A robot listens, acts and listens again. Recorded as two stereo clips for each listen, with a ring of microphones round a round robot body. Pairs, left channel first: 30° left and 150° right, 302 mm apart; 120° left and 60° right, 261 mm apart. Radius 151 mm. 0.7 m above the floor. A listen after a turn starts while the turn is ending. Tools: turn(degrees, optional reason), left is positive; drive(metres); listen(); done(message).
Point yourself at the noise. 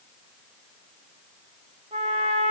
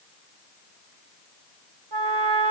turn(degrees=-75, reason="The trumpet: 75° right.")
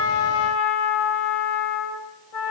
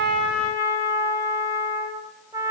turn(degrees=20, reason="The trumpet is now 20° left.")
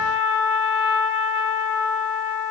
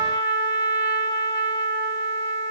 done("Facing the trumpet.")